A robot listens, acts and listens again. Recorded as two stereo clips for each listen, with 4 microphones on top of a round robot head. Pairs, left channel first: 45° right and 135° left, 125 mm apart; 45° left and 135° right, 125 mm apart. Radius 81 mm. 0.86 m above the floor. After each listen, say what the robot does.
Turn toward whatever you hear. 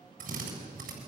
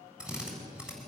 Turn 145° left.
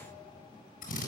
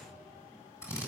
Turn 25° right.
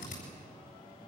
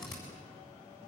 Turn 10° right.
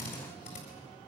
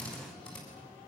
Facing the drill, over 4 m away.